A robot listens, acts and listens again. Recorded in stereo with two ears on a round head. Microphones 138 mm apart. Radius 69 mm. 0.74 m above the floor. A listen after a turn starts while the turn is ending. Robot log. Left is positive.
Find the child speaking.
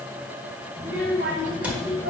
cmd yaw -90
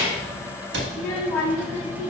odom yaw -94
note: So it is at 15° left.
cmd yaw +15
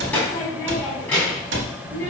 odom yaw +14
note: The child speaking is now 15° left.
cmd yaw +15
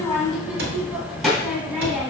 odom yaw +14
end: Facing the child speaking.